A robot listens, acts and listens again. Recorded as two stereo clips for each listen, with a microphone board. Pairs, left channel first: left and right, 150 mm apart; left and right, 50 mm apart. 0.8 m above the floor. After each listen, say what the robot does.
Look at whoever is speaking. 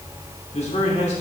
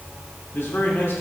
Turn 45° left.
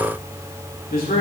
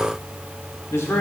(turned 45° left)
Turn 90° left.
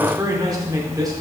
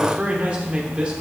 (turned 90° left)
Turn 25° right.
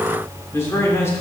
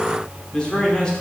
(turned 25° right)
Turn 20° left.
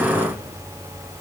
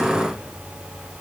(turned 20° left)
Keep listening.
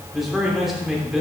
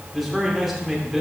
Found it: a man speaking, straight ahead, 2 to 4 m away.